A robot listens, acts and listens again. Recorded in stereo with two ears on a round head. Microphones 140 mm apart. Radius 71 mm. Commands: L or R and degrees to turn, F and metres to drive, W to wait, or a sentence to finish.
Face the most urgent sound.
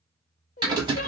L50
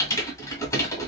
W
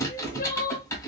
L70
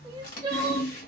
R30
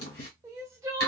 R20
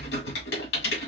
W
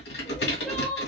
Found it: crying, straight ahead.